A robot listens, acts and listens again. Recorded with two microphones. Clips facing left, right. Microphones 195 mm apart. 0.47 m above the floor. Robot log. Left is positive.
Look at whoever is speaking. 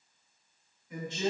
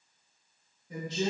note: The woman speaking: about 40° right or 140° right.
cmd yaw -40
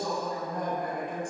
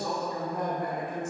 end: Facing the woman speaking, 1 to 2 m away.